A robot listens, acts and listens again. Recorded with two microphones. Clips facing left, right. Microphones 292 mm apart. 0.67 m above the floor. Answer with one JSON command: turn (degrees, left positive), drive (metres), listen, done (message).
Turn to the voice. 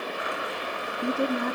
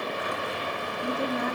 {"turn": 50}
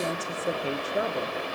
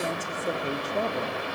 {"turn": 10}
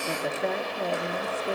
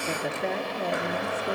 {"done": "Facing the woman speaking."}